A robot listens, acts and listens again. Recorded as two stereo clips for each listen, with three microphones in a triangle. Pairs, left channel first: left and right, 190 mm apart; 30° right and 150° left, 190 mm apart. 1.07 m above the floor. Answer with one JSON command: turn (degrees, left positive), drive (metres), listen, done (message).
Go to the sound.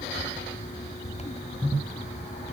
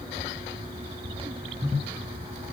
{"listen": true}
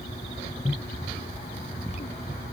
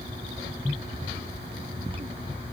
{"listen": true}
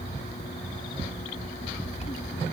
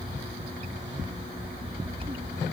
{"done": "I can't make out anything."}